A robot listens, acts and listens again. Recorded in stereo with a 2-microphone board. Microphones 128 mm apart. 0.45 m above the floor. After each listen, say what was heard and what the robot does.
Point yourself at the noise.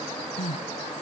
The crying: about 55° left or 125° left. Turn 55° left.
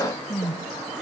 Found it: crying, straight ahead.